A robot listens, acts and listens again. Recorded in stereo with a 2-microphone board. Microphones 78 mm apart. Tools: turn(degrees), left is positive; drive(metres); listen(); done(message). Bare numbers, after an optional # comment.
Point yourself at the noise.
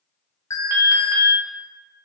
# The alarm: about 40° left or 140° left.
turn(40)
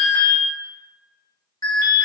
# So it is at 90° left.
turn(90)
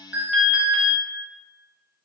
# The alarm is now 15° right.
turn(-15)
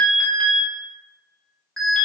done("Facing the alarm, 1 to 2 m away.")